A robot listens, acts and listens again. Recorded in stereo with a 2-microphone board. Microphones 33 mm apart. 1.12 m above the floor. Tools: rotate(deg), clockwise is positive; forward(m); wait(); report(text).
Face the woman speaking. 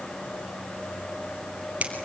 wait()
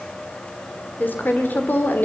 rotate(-70)
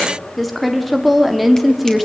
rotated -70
report("Found it: a woman speaking, straight ahead.")